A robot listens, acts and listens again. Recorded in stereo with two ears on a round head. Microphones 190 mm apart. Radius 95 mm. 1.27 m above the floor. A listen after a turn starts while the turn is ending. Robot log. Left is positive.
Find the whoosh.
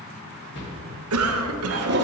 note: The whoosh: about 55° left or 125° left.
cmd yaw +55
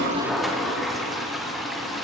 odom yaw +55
cmd idle
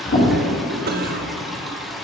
note: So it is at 65° left.
cmd yaw +65
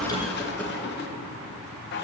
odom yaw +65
cmd idle
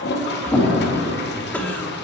note: The whoosh is now 10° left.
cmd yaw +10
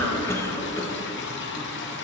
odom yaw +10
cmd idle
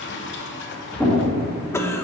end: Found it: a whoosh, straight ahead.